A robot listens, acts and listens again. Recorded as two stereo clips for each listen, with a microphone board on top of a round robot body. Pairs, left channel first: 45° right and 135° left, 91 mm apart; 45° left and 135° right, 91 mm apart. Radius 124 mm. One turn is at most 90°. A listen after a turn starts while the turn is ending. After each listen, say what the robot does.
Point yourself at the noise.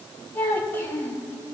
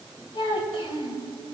Turn 20° left.
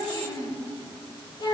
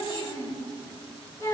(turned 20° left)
Turn 10° right.
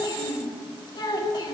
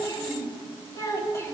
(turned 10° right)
Turn 15° right.
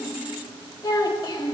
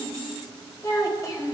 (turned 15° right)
Found it: a child speaking, straight ahead.